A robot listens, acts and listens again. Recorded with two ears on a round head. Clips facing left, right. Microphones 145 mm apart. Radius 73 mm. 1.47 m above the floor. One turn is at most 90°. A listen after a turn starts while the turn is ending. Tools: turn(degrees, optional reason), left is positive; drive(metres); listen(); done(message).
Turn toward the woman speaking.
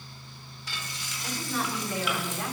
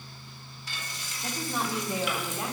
turn(degrees=-15, reason="The woman speaking: about 15° right or 165° right.")
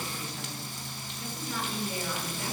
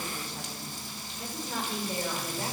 turn(degrees=-30, reason="The woman speaking: about 30° right or 150° right.")
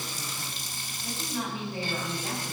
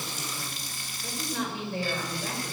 turn(degrees=-90, reason="So it is at 125° right.")
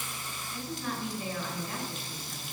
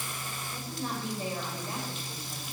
turn(degrees=-30, reason="The woman speaking is now 30° right.")
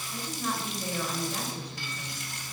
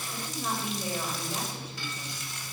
done("Facing the woman speaking.")